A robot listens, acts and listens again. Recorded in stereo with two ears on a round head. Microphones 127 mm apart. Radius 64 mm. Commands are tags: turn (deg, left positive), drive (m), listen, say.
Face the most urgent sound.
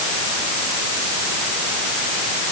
<listen/>
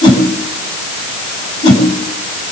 <listen/>
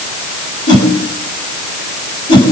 <say>I can't make out anything urgent to turn to.</say>